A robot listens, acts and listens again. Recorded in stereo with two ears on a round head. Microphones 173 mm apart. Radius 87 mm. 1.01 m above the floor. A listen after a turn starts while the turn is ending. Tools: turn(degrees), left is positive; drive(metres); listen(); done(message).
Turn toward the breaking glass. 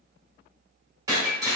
turn(degrees=-20)
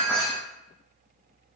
done("Facing the breaking glass.")